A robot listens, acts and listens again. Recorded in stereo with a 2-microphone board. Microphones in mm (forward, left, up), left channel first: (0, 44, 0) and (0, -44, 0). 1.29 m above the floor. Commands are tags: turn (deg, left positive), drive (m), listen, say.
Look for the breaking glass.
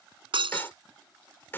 <turn deg="-90"/>
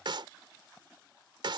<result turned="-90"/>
<say>Facing where the breaking glass came from. I can't hear it now.</say>